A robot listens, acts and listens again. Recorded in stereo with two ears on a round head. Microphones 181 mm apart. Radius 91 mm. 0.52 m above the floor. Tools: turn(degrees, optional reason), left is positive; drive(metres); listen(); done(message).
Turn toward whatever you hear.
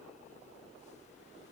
listen()
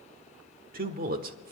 turn(degrees=-50, reason="The man speaking: about 50° right or 130° right.")
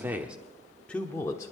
turn(degrees=15, reason="So it is at 15° left.")
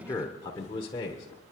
turn(degrees=30, reason="The man speaking is now 30° left.")
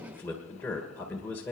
turn(degrees=10, reason="The man speaking is now 10° left.")
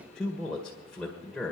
done("Facing the man speaking, 1 to 2 m away.")